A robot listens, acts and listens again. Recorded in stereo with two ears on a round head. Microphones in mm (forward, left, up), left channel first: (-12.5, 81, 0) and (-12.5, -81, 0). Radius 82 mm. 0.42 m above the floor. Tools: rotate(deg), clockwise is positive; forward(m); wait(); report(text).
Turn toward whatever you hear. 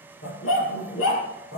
rotate(-90)
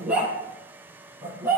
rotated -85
rotate(10)
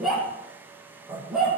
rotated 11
report("Facing the dog barking, over 4 m away.")